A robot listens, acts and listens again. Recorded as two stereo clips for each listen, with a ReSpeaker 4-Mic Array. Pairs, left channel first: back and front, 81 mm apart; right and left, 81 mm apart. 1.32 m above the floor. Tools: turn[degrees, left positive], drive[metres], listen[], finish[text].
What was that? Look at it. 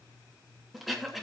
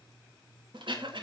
Thought: The throat clearing: 90° left.
Action: turn[90]
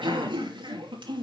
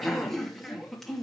Action: finish[Facing the throat clearing, 2 to 4 m away.]